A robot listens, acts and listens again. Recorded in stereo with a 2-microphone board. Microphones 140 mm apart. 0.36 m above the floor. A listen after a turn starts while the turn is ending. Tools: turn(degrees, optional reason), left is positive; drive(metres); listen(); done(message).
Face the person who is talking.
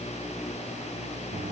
listen()
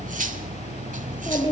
turn(degrees=35, reason="The child speaking: about 35° left or 145° left.")
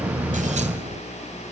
listen()
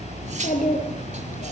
turn(degrees=110, reason="So it is at 110° left.")
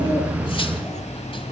listen()
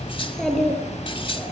done("Found it: a child speaking, straight ahead.")